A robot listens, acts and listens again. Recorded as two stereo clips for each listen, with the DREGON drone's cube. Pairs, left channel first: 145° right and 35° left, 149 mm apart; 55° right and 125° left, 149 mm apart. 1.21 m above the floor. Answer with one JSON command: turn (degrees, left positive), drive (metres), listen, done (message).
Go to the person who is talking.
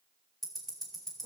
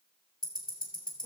{"listen": true}
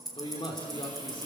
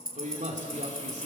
{"turn": 160}
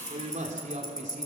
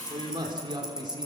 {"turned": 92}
{"turn": 65}
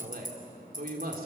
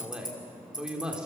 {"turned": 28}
{"turn": 40}
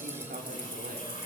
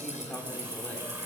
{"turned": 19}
{"turn": 20}
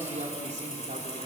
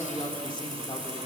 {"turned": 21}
{"drive": 1.0}
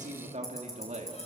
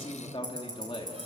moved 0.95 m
{"drive": 1.0}
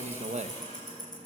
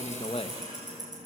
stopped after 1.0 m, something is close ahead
{"done": "Arrived at the man speaking, straight ahead."}